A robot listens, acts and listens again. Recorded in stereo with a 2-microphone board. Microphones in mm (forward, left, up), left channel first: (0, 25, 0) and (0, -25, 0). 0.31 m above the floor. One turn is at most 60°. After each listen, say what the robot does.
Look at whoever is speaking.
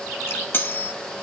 Keep listening.
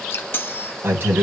Turn 50° right.
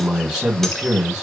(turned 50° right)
Turn 15° right.
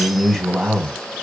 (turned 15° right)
Facing the man speaking, 2 to 4 m away.